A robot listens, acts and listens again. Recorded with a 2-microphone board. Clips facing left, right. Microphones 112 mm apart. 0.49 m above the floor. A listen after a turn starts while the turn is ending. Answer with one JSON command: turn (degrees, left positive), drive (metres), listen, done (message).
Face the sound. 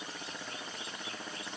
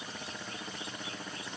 {"listen": true}
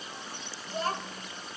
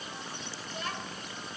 {"turn": 40}
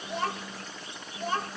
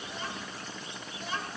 {"turn": 45}
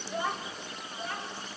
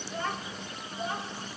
{"turn": -20}
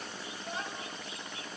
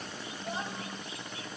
{"turn": -15}
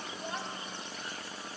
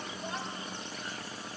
{"done": "Found it: a child speaking, straight ahead."}